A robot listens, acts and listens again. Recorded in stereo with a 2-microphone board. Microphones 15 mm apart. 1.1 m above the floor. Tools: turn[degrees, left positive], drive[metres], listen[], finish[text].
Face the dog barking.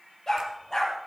Thought: The dog barking: about 30° left or 150° left.
Action: turn[30]
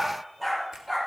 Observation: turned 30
Thought: So it is at 10° right.
Action: turn[-10]
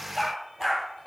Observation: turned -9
Action: finish[Found it: a dog barking, straight ahead, over 4 m away.]